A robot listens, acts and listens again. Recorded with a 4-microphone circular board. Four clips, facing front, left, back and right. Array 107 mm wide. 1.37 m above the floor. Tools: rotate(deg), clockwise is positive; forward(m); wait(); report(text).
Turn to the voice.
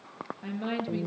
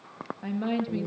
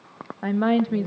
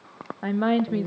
rotate(145)
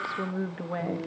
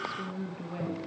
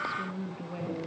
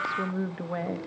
rotate(45)
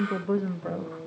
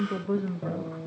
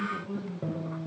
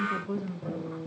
rotate(-20)
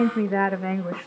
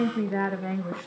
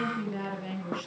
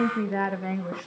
report("Found it: a woman speaking, straight ahead, 1 to 2 m away.")